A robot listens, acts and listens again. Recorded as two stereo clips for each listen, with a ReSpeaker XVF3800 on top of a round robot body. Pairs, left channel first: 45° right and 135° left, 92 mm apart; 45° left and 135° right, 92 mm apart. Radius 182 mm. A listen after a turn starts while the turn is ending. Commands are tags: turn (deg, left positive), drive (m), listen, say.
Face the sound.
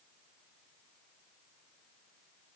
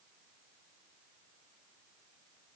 <listen/>
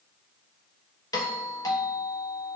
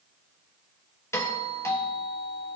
<turn deg="-10"/>
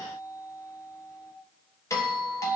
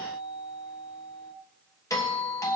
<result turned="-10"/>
<say>Found it: a doorbell, straight ahead.</say>